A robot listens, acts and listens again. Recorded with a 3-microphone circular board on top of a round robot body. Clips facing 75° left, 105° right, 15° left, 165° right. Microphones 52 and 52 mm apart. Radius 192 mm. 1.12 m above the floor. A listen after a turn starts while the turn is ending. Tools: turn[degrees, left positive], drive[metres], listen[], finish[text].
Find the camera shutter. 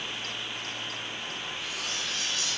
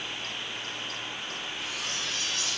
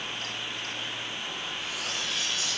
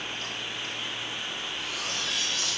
Action: listen[]
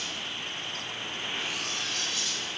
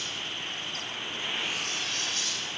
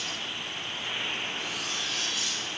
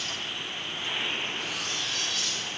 Action: listen[]
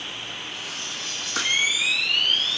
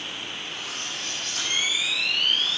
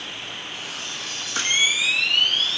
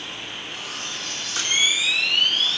Thought: The camera shutter: 75° left.
Action: turn[75]
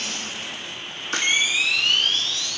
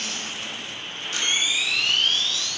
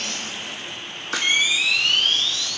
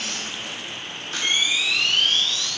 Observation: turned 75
Thought: The camera shutter is now 30° left.
Action: turn[30]
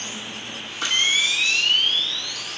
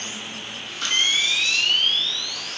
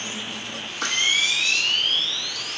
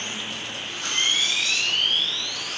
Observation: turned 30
Action: finish[Facing the camera shutter, 1 to 2 m away.]